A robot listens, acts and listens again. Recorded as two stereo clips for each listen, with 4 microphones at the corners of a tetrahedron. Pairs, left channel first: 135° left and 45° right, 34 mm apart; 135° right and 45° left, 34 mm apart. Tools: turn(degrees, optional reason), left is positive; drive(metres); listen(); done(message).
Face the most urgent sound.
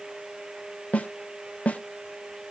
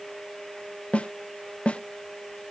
listen()
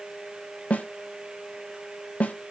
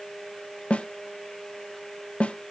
listen()
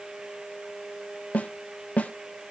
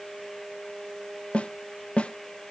done("I can't make out anything urgent, only a snare drum.")